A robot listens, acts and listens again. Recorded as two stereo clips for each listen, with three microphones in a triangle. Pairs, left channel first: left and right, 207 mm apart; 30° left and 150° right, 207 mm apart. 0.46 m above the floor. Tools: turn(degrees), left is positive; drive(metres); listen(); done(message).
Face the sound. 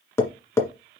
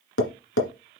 turn(degrees=15)
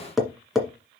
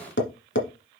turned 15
done("Facing the tapping, 1 to 2 m away.")